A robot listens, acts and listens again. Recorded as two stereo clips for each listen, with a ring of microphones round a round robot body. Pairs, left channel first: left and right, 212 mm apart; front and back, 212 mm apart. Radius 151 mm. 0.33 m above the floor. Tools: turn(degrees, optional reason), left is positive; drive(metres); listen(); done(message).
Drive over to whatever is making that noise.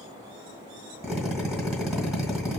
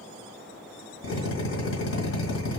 drive(metres=1.0)
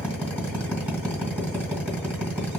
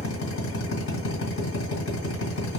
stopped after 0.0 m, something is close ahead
done("Blocked. The drill is further on, straight ahead.")